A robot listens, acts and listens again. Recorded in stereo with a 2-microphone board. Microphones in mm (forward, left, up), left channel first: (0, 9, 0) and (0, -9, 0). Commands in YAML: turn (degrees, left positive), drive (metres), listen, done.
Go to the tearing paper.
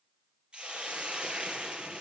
listen: true
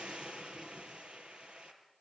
listen: true
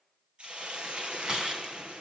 turn: -45
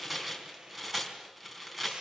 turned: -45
drive: 1.0
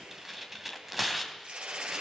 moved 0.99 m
turn: -10
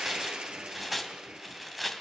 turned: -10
drive: 1.0
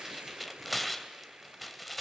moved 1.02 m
drive: 1.0
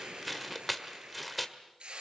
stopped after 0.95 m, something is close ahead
done: "I am next to the tearing paper."